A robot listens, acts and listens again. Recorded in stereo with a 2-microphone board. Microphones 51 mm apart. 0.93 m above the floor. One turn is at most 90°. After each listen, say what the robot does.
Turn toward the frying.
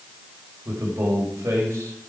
Keep listening.
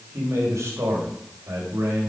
Keep listening.
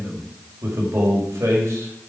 I can't make out frying, only a man speaking.